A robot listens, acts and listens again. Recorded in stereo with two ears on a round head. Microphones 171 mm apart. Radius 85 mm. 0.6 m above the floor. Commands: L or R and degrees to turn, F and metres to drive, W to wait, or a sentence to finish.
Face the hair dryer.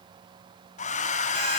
L40
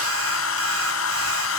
L100
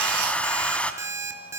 Facing the hair dryer.